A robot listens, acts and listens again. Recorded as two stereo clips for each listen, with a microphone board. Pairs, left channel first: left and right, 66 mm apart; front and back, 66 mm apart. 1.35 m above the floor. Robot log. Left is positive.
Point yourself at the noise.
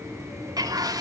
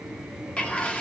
note: The bird: 75° right.
cmd yaw -75
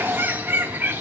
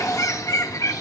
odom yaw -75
note: The bird is now 30° right.
cmd yaw -30
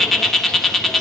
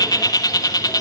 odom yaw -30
end: Found it: a bird, straight ahead, 2 to 4 m away.